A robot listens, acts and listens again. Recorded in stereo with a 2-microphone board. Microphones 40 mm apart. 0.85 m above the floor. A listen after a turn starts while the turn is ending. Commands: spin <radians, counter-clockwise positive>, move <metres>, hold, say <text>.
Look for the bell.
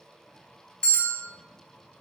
spin 0.35
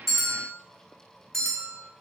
say Facing the bell, under 1 m away.